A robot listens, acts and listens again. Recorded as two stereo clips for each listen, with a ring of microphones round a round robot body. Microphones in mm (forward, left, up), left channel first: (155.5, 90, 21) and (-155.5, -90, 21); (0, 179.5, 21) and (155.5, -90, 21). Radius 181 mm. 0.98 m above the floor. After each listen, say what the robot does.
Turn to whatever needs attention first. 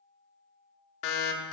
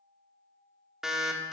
Turn 30° left.
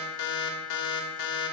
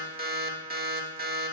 Found it: an alarm, straight ahead, 1 to 2 m away.